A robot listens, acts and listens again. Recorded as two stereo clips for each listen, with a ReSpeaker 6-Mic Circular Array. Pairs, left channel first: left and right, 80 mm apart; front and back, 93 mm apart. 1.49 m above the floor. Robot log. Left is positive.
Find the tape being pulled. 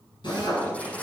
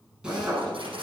note: The tape being pulled: 165° left.
cmd yaw +165
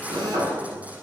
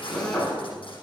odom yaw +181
note: The tape being pulled is now 20° right.
cmd yaw -20
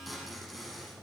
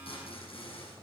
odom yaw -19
end: Facing the tape being pulled.